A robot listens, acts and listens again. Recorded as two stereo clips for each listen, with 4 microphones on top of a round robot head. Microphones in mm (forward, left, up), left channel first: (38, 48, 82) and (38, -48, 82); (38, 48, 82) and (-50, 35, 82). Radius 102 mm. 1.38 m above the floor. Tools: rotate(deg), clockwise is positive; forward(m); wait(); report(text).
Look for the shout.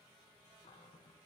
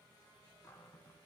wait()
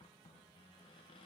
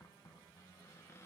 wait()
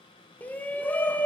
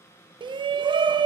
rotate(-165)
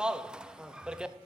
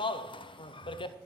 rotate(10)
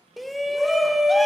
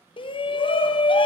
report("Facing the shout, under 1 m away.")